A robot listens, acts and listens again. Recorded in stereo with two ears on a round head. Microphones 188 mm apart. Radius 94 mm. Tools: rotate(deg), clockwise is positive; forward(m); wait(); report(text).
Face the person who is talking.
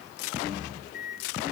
wait()
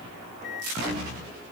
wait()
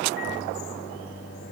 report("I can't make out anyone speaking to turn to.")